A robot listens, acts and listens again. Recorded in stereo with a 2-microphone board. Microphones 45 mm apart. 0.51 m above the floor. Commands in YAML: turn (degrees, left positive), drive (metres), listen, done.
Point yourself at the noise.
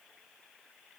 listen: true
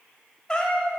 turn: 15
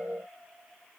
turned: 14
listen: true
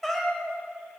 done: "Found it: a cat meowing, straight ahead, 1 to 2 m away."